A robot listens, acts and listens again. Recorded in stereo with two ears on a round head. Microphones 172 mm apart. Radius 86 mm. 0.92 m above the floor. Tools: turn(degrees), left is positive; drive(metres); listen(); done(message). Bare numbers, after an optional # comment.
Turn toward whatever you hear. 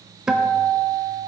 turn(-30)
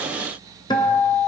# So it is at 25° left.
turn(25)
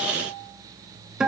done("Found it: a guitar, straight ahead.")